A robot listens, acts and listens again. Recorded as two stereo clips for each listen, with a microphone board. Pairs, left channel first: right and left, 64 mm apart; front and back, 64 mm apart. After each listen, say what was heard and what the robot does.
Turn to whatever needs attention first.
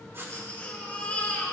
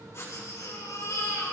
The baby crying: 25° right. Turn 25° right.
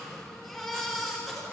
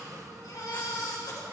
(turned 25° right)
Found it: a baby crying, straight ahead, 2 to 4 m away.